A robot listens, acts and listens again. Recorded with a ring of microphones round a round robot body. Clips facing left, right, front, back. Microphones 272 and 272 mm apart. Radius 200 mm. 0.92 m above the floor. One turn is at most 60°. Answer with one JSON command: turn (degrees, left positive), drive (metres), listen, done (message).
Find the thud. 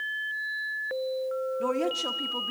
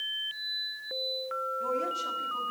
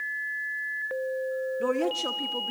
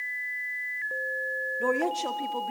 {"listen": true}
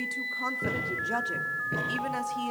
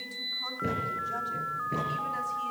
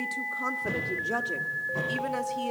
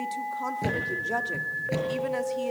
{"turn": 60}
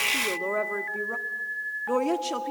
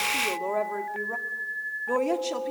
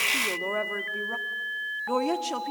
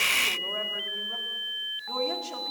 {"turn": 60}
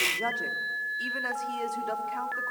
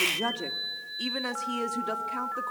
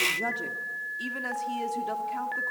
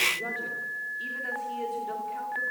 {"turn": 60}
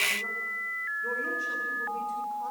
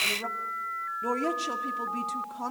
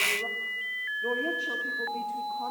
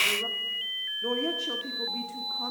{"done": "I heard a thud from this way, but can't make it out now."}